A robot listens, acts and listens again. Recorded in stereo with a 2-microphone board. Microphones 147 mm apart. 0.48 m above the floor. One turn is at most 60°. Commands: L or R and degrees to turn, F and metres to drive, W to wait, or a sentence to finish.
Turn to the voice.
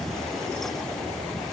W
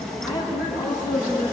R30
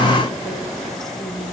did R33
R60
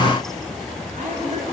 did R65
R60
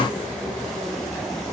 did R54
R15
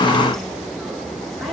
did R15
W
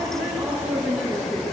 Facing the woman speaking, over 4 m away.